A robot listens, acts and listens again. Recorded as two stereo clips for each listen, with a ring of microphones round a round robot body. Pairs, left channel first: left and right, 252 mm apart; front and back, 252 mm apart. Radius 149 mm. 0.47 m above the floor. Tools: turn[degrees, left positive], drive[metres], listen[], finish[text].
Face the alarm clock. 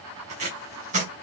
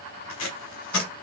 Action: listen[]
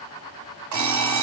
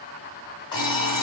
Thought: The alarm clock: 75° right.
Action: turn[-75]
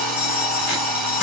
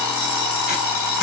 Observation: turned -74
Action: finish[Facing the alarm clock.]